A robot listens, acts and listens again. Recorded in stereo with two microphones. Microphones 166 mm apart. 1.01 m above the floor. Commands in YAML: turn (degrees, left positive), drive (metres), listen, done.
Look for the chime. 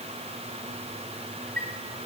turn: -70
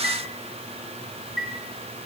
done: "Found it: a chime, straight ahead, 2 to 4 m away."